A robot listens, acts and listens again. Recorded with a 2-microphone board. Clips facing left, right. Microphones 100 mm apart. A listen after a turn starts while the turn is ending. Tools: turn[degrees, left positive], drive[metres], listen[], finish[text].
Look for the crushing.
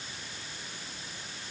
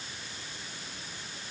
Action: listen[]
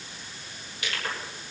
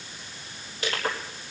Thought: The crushing: about 35° right or 145° right.
Action: turn[-35]
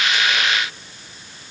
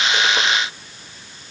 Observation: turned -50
Action: listen[]
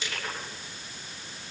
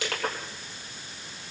Thought: So it is at 95° right.
Action: turn[-95]
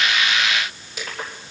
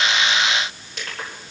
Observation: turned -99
Action: finish[Facing the crushing, 2 to 4 m away.]